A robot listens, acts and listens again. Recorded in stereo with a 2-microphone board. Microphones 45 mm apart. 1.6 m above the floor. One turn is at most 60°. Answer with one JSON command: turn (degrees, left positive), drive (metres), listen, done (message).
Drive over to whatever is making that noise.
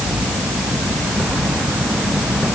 {"listen": true}
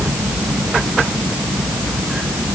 {"listen": true}
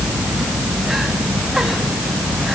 {"done": "I can't make out anything to turn to."}